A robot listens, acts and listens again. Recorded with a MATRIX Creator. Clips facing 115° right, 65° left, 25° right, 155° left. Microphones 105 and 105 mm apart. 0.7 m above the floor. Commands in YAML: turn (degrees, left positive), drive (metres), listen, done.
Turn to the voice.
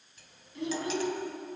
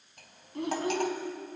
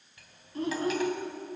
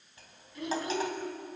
turn: 30
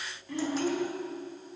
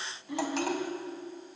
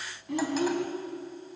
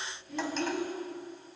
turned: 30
done: "Found it: a child speaking, straight ahead."